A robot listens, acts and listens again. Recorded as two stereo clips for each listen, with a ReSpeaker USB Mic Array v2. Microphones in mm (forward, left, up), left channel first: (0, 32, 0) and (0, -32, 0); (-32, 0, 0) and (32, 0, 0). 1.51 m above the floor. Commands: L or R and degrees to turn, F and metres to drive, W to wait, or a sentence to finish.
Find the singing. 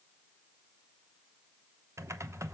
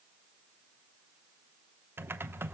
W
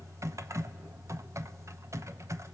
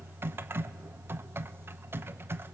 W
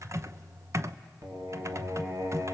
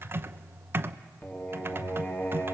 R120
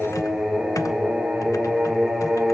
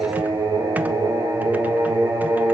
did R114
Found it: singing, straight ahead, 2 to 4 m away.